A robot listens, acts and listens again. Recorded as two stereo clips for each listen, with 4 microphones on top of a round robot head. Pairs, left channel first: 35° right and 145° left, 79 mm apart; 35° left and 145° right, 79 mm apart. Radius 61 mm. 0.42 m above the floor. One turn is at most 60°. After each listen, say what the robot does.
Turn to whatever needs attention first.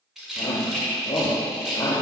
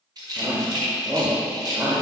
Turn 60° right.
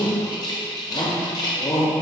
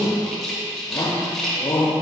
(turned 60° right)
Turn 10° right.
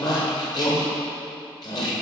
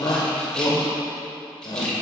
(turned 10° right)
Facing the shout.